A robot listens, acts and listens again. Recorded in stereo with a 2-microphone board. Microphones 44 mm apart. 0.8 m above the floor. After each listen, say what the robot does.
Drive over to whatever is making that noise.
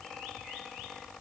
Keep listening.
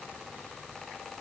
Keep listening.
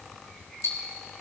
Turn 75° left.
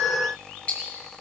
Turn 30° left.
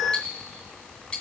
Turn 25° left.
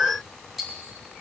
Drive 1.0 m forward.
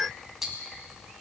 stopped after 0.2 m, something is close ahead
Turn 10° right.
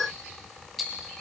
Something is in my way. I am facing the ticking but have not reached it.